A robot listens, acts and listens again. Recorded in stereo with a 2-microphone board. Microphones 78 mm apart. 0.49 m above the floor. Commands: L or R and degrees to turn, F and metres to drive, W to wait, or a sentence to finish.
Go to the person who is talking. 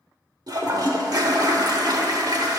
W
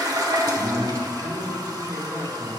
R35
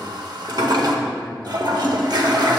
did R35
W
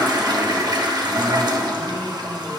W
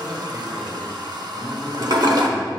F1.0
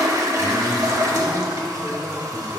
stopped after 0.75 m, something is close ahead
I am next to the man speaking.